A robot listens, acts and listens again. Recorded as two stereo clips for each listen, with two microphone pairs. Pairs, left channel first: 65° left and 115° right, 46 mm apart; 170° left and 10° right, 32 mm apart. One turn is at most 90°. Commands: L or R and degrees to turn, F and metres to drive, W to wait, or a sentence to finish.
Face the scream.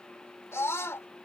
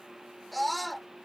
L80
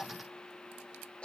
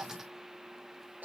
Facing the scream.